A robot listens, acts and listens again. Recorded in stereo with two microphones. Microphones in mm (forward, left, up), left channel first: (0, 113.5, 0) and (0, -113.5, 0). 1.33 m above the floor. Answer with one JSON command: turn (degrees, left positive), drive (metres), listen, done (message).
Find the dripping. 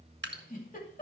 {"turn": -50}
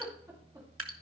{"turn": -75}
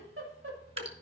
{"turn": -25}
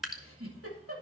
{"done": "Facing the dripping."}